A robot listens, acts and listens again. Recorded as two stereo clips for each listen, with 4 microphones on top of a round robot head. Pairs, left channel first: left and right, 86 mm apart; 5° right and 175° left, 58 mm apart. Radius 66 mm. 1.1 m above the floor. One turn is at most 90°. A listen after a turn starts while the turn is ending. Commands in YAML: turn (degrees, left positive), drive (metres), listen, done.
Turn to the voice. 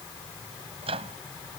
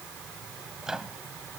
listen: true
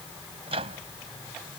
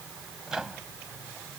listen: true
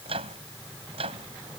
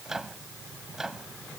done: "I can't make out anyone speaking, only a microwave."